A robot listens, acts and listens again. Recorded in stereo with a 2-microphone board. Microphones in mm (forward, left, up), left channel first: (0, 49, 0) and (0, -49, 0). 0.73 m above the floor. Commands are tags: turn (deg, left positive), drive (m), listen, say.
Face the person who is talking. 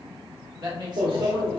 <turn deg="-50"/>
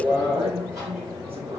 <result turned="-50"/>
<turn deg="-80"/>
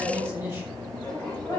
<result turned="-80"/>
<turn deg="-25"/>
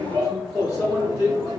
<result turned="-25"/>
<listen/>
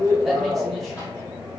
<listen/>
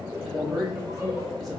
<say>Facing the man speaking, 1 to 2 m away.</say>